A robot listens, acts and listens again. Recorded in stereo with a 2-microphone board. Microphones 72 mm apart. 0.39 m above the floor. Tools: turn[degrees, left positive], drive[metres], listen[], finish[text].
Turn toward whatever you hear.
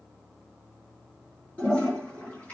Thought: The toilet flushing: about 25° left or 155° left.
Action: turn[25]
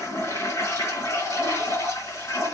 Thought: So it is at 130° left.
Action: turn[130]
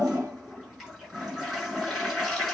Action: finish[Facing the toilet flushing, over 4 m away.]